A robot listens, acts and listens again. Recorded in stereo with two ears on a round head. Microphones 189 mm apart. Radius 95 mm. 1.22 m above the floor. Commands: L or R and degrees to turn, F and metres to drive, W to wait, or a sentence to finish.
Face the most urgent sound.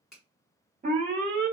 R40
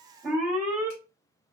Facing the alarm.